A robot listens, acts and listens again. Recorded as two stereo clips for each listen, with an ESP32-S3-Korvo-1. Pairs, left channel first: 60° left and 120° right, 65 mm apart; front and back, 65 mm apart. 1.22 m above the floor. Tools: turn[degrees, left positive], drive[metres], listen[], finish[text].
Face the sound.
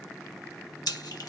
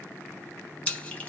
Thought: The splash: 65° left.
Action: turn[65]
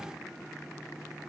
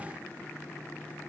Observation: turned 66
Action: finish[Facing where the splash came from. I can't hear it now.]